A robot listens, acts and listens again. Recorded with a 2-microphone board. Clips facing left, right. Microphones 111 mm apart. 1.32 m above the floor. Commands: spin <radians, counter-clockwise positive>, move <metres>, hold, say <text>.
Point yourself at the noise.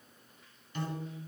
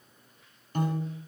spin -0.79
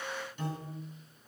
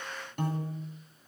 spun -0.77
spin -1.40
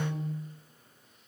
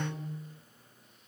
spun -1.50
say Facing the piano.